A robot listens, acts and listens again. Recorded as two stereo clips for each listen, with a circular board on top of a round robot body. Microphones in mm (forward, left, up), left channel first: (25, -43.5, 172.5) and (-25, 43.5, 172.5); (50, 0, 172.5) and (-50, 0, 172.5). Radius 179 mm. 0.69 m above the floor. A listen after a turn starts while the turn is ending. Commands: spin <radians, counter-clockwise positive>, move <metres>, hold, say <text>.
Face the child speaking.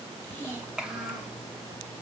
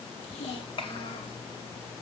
spin 0.52
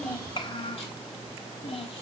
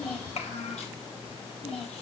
spin -0.44
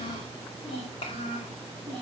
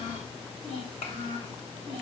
spin -0.44
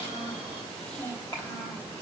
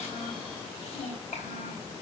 say Found it: a child speaking, straight ahead, over 4 m away.